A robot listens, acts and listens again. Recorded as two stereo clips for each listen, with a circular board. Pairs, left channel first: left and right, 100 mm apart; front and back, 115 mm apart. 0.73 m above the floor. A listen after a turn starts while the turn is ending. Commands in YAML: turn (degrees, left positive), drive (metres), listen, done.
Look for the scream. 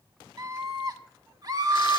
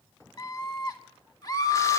turn: -50
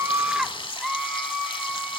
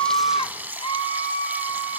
done: "Found it: a scream, straight ahead, 1 to 2 m away."